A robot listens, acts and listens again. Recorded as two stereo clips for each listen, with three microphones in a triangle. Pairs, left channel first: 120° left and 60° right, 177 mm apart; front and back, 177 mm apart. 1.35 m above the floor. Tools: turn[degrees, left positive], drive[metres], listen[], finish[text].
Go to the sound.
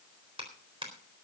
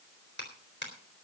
Action: drive[1.0]
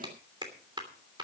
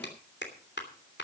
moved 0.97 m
Action: drive[1.0]
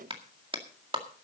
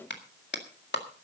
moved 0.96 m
Action: drive[1.0]
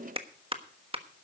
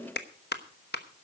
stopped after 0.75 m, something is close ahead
Action: finish[I am next to the clap.]